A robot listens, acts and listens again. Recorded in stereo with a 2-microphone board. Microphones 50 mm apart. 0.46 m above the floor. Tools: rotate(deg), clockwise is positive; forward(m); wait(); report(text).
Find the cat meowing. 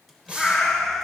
rotate(-30)
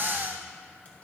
wait()
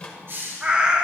rotate(25)
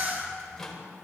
wait()
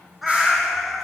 report("Facing the cat meowing, under 1 m away.")